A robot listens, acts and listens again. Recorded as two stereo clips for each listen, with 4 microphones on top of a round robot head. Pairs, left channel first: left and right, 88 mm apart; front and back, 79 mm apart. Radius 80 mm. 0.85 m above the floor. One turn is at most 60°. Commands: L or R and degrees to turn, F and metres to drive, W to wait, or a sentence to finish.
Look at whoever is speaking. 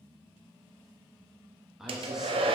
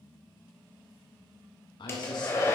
Facing the man speaking, 1 to 2 m away.